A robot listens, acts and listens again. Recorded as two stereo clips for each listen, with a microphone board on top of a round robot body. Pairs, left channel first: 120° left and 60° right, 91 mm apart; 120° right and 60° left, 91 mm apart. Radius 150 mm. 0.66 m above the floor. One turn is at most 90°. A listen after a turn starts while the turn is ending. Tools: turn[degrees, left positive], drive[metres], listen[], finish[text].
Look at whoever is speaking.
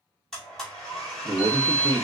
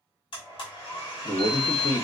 Thought: The man speaking: 90° right.
Action: turn[-90]
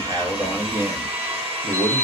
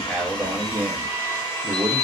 Action: finish[Facing the man speaking.]